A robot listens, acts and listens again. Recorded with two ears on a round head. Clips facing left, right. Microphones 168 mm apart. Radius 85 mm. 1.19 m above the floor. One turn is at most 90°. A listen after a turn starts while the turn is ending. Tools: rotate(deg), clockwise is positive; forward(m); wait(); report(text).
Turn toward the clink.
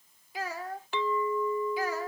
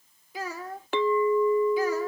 rotate(45)
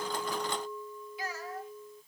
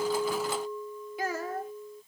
rotate(10)
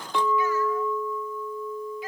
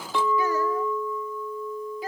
report("Found it: a clink, straight ahead.")